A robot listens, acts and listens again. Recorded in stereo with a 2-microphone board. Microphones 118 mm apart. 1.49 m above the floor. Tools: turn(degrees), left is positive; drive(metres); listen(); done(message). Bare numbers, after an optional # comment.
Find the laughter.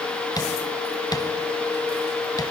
listen()
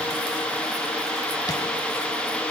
listen()
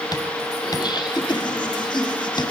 # The laughter: about 40° left or 140° left.
turn(40)
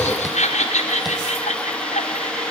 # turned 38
# So it is at 100° left.
turn(100)
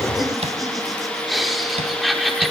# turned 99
done("Found it: laughter, straight ahead.")